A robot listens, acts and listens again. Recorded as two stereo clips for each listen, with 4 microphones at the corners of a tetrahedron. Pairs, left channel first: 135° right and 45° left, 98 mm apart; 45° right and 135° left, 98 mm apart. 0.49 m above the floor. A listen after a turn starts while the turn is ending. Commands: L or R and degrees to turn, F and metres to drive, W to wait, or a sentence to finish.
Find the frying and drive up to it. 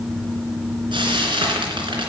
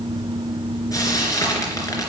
L10
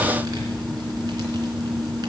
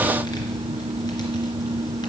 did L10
W
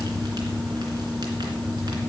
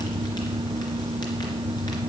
W
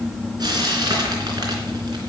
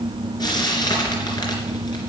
F1.0
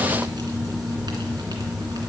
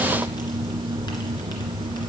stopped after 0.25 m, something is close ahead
W
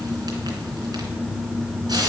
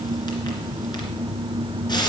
Something is in my way. I am facing the frying but have not reached it.